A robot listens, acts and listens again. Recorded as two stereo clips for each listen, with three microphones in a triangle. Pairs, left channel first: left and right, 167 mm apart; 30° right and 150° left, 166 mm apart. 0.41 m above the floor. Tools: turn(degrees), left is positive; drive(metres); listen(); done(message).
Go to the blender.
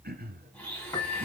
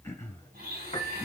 turn(degrees=170)
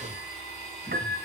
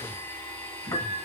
turn(degrees=45)
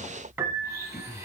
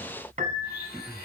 turn(degrees=-20)
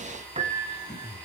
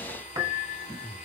turn(degrees=10)
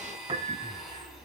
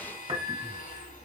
drive(metres=1.0)
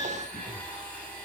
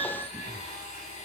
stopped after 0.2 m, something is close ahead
turn(degrees=10)
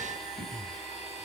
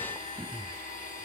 done("Something is in my way. I am facing the blender but have not reached it.")